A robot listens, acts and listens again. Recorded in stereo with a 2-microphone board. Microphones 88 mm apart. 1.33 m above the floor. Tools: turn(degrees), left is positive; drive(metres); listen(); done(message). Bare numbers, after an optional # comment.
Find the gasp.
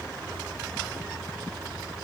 listen()
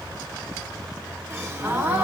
# The gasp: about 25° right or 155° right.
turn(-25)
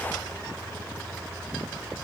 listen()
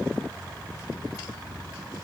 done("I heard a gasp, but can't make it out now. It was about straight ahead or 130° right.")